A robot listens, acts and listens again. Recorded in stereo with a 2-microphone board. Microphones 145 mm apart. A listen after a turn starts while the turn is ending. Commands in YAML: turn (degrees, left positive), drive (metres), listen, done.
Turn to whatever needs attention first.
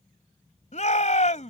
turn: 55
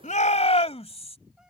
turn: 55
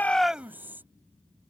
listen: true
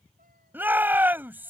turn: -15
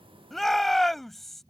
done: "Facing the shout."